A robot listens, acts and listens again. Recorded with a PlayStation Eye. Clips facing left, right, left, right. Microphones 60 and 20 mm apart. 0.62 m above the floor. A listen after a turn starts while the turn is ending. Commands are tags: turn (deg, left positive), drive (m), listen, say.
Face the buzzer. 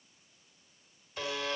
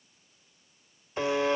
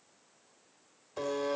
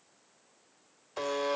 <turn deg="-25"/>
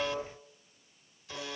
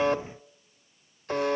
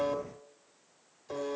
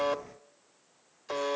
<turn deg="-130"/>
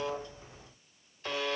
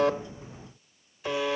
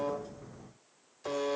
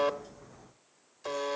<turn deg="-10"/>
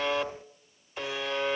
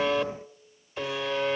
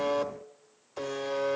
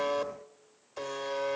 <say>Facing the buzzer.</say>